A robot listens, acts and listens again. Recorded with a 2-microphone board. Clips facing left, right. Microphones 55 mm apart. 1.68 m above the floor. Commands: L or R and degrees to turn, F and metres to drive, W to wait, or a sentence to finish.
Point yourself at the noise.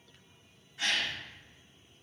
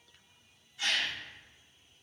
L50
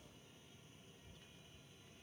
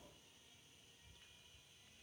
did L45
W
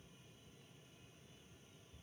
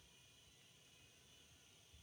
I heard a gasp, but can't make it out now. It was about 5° left or 85° left.